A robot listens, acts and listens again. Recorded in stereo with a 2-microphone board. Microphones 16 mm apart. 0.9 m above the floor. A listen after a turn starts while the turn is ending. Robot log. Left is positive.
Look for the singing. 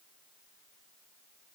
cmd idle
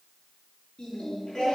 note: The singing: about 45° left or 135° left.
cmd yaw +45
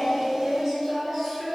end: Facing the singing, 2 to 4 m away.